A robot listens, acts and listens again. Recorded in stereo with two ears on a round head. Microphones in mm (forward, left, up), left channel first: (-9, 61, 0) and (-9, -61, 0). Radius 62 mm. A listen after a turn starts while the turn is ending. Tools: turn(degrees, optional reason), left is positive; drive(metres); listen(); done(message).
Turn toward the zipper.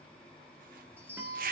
turn(degrees=-70, reason="The zipper: about 70° right or 110° right.")
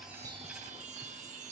listen()
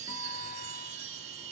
listen()
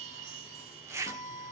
turn(degrees=-20, reason="So it is at 20° right.")
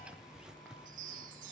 done("Facing the zipper, 1 to 2 m away.")